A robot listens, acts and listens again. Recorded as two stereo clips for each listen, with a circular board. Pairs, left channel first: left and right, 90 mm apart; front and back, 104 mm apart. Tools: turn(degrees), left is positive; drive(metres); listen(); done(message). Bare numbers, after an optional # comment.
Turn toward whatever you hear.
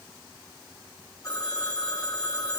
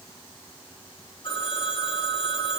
# The phone ringing: 40° left.
turn(40)
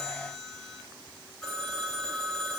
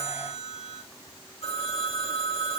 done("Facing the phone ringing, over 4 m away.")